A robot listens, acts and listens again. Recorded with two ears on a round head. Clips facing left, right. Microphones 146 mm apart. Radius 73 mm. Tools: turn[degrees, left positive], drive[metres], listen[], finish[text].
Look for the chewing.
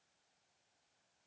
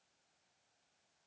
Action: listen[]
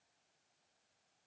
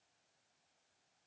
Action: listen[]
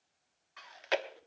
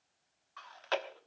Thought: The chewing: about 20° left or 160° left.
Action: turn[20]
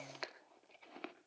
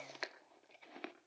Action: finish[Found it: chewing, straight ahead.]